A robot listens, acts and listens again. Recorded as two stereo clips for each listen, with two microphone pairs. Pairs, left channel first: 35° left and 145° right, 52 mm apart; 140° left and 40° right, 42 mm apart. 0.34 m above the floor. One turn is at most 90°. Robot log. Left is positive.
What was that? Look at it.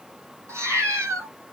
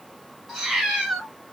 note: The cat meowing: 120° right.
cmd yaw -90
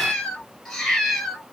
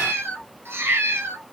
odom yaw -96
note: The cat meowing is now 50° right.
cmd yaw -50
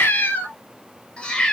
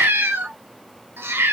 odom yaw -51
note: The cat meowing is now 45° right.
cmd yaw -45
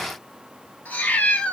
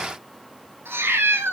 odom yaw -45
note: The cat meowing is now 30° right.
cmd yaw -30
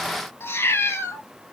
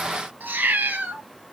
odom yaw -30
end: Found it: a cat meowing, straight ahead.